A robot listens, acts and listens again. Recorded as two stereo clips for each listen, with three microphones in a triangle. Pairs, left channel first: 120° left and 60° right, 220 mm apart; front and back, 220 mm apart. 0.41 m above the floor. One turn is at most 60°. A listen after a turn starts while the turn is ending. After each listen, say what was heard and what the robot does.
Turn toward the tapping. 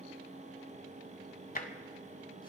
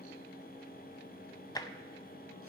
The tapping: 75° left. Turn 60° left.
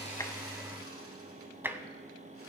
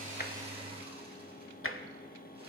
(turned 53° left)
The tapping is now 20° left. Turn 20° left.
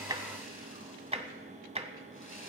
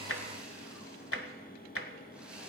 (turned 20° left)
Facing the tapping.